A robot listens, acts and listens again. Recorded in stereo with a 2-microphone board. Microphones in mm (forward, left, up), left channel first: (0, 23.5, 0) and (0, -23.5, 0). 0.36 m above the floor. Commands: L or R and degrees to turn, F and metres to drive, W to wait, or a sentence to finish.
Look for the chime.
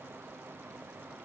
W
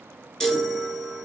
L30
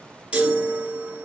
R25
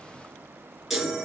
Facing the chime.